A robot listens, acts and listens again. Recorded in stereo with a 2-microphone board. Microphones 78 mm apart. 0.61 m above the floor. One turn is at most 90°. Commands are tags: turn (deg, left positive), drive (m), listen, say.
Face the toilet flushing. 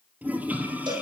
<turn deg="-20"/>
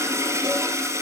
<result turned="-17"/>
<turn deg="-90"/>
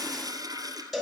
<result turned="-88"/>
<turn deg="-55"/>
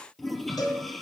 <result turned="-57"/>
<say>Found it: a toilet flushing, straight ahead.</say>